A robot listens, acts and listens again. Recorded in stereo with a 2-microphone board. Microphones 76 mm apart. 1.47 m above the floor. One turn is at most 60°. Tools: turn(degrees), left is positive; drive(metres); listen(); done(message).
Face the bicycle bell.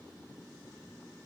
listen()
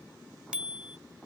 turn(degrees=-30)
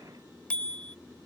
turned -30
turn(degrees=15)
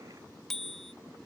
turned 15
done("Found it: a bicycle bell, straight ahead.")